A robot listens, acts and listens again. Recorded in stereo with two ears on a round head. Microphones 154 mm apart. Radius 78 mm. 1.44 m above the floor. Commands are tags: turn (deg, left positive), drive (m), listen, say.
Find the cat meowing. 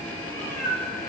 <turn deg="20"/>
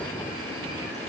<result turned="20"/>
<listen/>
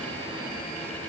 <listen/>
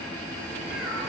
<say>Facing the cat meowing, 2 to 4 m away.</say>